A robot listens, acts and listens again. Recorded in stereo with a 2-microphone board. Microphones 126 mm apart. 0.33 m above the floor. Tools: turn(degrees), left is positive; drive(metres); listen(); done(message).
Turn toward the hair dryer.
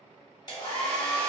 turn(degrees=30)
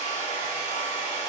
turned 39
turn(degrees=105)
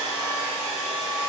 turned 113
turn(degrees=-10)
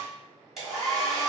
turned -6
done("Facing the hair dryer, 1 to 2 m away.")